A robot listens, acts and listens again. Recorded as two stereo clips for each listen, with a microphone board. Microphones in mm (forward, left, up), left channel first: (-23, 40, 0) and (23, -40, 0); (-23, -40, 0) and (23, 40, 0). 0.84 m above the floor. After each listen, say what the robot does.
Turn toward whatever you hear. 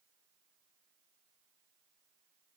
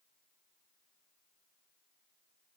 Keep listening.
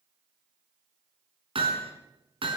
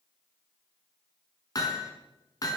Turn 75° right.
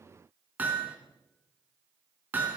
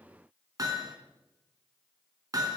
Turn 10° left.
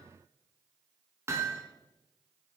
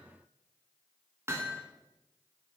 Found it: hammering, straight ahead.